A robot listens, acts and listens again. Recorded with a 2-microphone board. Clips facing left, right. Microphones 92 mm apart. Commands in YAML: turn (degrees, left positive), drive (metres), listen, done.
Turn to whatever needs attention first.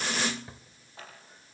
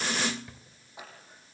listen: true
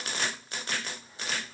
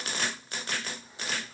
listen: true
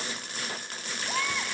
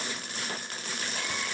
turn: 90
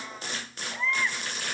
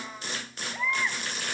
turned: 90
turn: -10
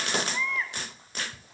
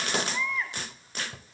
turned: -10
done: "Found it: a baby crying, straight ahead."